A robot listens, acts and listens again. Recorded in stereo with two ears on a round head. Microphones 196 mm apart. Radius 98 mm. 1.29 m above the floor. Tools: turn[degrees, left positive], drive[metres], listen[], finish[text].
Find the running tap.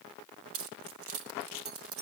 Action: listen[]
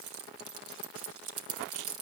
Action: listen[]
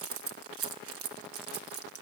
Action: finish[I can't make out a running tap, only keys jangling.]